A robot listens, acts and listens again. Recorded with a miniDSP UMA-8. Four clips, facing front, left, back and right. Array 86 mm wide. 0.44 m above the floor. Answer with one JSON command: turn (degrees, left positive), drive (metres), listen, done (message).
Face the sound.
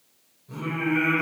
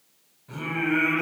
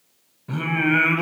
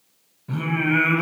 {"turn": -160}
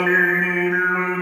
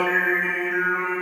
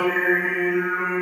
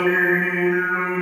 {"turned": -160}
{"done": "Facing the singing, 1 to 2 m away."}